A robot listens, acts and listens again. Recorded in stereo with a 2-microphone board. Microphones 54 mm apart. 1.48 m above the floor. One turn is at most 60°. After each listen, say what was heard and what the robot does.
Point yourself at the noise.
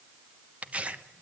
The tearing paper: about 25° right or 155° right. Turn 25° right.
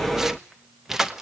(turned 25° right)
Facing the tearing paper.